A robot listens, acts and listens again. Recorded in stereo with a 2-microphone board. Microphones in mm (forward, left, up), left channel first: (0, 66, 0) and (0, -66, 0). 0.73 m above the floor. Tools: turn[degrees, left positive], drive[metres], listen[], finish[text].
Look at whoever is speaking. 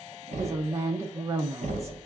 Thought: The woman speaking: about 20° right or 160° right.
Action: turn[-20]
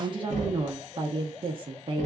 Thought: So it is at 135° right.
Action: turn[-135]
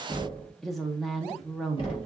Action: finish[Facing the woman speaking.]